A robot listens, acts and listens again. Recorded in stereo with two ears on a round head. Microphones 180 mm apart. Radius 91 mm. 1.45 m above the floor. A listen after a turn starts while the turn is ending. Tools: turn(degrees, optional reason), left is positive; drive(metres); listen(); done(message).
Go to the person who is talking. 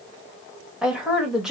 turn(degrees=-30)
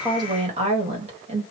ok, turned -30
turn(degrees=-145, reason="So it is at 145° right.")
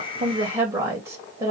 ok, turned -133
turn(degrees=-15, reason="The woman speaking is now 15° right.")
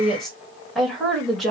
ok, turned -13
drive(metres=1.0)
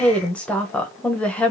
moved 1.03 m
drive(metres=1.0)
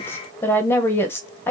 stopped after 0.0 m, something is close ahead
turn(degrees=10, reason="The woman speaking is now 10° left.")
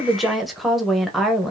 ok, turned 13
done("Arrived at the woman speaking, straight ahead.")